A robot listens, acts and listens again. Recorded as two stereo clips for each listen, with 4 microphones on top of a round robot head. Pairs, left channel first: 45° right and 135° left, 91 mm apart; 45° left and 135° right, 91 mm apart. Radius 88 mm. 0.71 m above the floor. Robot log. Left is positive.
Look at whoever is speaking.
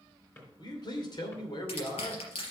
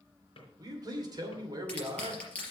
note: The man speaking: 90° right.
cmd yaw -90
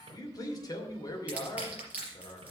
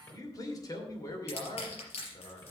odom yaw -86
end: Found it: a man speaking, straight ahead, 2 to 4 m away.